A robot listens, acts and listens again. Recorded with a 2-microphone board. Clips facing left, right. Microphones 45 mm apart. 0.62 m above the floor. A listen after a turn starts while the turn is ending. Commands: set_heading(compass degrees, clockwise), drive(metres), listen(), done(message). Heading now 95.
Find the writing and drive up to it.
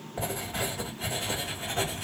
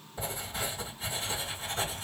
set_heading(35)
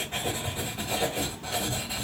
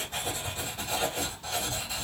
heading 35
set_heading(10)
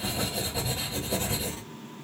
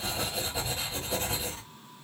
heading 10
drive(1.0)
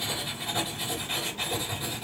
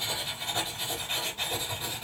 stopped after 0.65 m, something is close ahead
done("Arrived at the writing, straight ahead.")